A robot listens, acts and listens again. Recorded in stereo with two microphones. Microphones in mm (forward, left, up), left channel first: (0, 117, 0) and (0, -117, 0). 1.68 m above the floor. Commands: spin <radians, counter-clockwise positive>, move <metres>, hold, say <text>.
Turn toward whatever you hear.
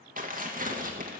spin -0.61
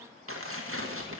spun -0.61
spin -1.83
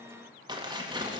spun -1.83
spin -0.35
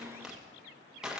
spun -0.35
say Found it: tearing paper, straight ahead, 1 to 2 m away.